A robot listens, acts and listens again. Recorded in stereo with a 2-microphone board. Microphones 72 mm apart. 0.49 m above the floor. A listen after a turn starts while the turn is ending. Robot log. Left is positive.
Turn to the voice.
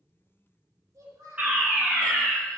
note: The child speaking: about 50° right or 130° right.
cmd yaw -50
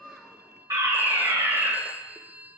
cmd idle
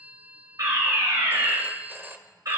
cmd idle
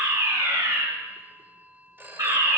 end: I heard a child speaking, but can't make it out now. It was about straight ahead or 80° right.